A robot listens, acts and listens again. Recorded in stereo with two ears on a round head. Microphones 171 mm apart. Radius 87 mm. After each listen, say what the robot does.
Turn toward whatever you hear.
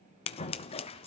Turn 30° left.
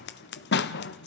Turn 115° left.
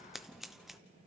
Found it: scissors, straight ahead, under 1 m away.